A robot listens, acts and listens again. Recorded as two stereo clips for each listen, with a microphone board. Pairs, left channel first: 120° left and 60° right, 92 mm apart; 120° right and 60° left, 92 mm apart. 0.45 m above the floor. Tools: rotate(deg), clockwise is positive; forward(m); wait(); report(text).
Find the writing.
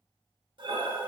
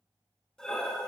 wait()
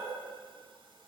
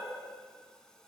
wait()
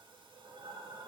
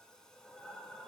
report("I can't make out writing, only breathing.")